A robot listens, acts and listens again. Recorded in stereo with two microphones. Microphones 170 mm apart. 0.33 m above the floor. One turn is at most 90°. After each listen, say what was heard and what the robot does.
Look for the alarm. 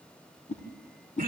Keep listening.
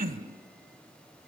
Keep listening.
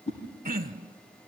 I can't make out an alarm to turn to.